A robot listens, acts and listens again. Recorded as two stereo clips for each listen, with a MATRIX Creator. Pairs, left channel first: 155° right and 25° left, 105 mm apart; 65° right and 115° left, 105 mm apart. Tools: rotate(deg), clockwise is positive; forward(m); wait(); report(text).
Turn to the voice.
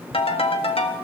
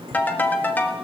wait()
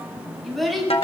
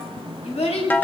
rotate(70)
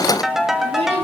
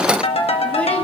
wait()
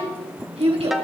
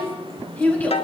rotate(-10)
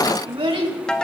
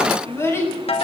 report("Found it: a child speaking, straight ahead.")